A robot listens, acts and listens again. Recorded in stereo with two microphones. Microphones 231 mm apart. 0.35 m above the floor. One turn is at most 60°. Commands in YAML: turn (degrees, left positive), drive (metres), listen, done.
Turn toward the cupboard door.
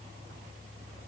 listen: true
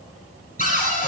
turn: 35
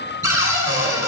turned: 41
turn: 60
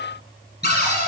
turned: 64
turn: 40
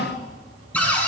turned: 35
done: "Facing the cupboard door, 1 to 2 m away."